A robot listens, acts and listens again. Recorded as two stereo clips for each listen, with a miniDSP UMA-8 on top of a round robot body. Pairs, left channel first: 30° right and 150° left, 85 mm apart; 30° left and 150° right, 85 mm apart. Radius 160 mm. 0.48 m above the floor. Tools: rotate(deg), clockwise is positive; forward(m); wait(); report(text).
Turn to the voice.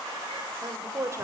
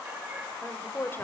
rotate(-95)
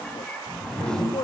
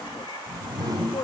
report("Found it: a woman speaking, straight ahead, 2 to 4 m away.")